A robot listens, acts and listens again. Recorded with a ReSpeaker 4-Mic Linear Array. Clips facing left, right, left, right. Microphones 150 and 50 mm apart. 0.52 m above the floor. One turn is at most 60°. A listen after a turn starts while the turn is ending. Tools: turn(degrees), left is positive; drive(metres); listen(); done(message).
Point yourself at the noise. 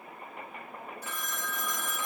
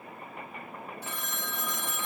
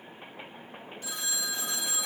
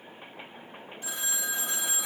turn(degrees=-25)
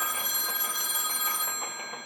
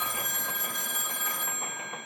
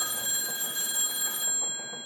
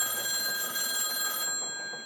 turn(degrees=-60)
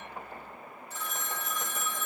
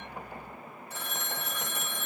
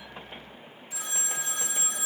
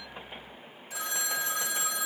turn(degrees=-60)
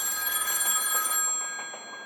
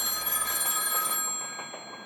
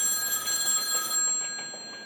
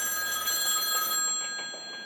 turn(degrees=-30)
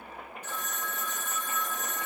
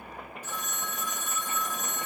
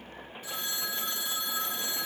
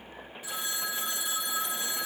turn(degrees=-10)
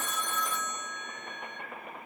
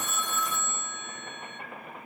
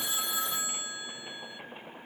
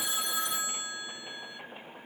done("Found it: a phone ringing, straight ahead, 1 to 2 m away.")